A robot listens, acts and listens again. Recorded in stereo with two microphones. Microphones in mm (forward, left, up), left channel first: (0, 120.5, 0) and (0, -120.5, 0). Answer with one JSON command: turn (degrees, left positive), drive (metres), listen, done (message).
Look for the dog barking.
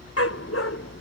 {"turn": 90}
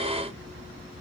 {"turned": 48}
{"turn": 40}
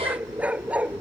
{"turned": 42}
{"done": "Facing the dog barking."}